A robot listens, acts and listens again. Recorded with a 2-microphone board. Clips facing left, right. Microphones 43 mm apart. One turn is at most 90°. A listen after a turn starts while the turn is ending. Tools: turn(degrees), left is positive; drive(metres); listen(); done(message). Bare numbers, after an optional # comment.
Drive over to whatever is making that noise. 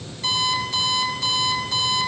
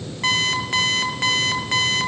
# The alarm clock: about 50° right or 130° right.
turn(-50)
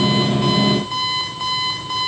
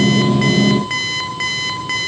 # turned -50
# So it is at 80° right.
turn(-80)
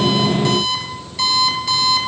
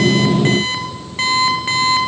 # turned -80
# The alarm clock is now 40° right.
turn(-40)
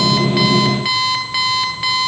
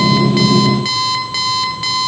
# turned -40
# The alarm clock is now 15° left.
turn(15)
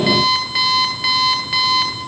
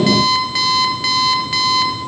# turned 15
drive(1.0)
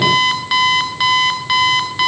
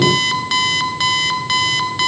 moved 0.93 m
# The alarm clock is now 10° left.
turn(10)
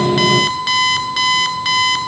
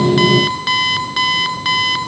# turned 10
drive(1.0)
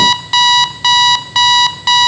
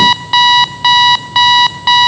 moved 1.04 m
# The alarm clock is now 10° right.
turn(-10)
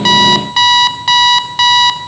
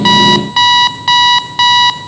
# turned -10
drive(1.0)
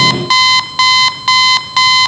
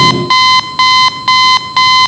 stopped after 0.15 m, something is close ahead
done("I am next to the alarm clock.")